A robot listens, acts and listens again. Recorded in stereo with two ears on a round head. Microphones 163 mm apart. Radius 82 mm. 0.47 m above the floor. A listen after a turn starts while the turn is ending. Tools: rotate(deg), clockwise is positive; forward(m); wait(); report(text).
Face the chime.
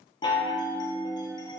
rotate(-25)
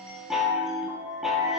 report("Found it: a chime, straight ahead, 1 to 2 m away.")